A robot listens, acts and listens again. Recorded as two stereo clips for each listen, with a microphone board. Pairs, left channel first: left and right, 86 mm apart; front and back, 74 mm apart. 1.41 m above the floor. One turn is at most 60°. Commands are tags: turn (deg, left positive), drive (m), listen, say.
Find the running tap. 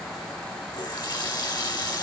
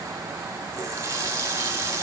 <turn deg="60"/>
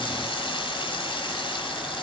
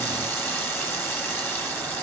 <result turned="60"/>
<turn deg="60"/>
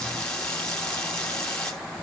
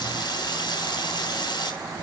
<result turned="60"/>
<turn deg="10"/>
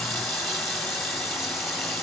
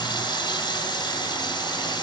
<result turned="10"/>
<say>Facing the running tap.</say>